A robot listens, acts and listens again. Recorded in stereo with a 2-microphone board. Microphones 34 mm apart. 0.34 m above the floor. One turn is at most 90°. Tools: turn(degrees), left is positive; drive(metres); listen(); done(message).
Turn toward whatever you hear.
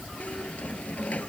turn(degrees=50)
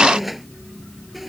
done("Facing the squeak.")